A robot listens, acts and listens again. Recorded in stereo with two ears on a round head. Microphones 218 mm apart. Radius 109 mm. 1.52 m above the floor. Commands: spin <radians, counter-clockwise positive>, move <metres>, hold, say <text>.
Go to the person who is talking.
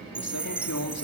spin 1.31
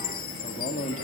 spin 0.52
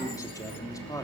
spin 0.26
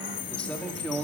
move 1.0
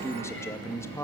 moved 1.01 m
spin 0.17
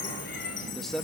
move 1.0
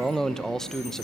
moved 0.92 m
move 1.0
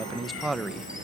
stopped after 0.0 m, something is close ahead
say I am next to the man speaking.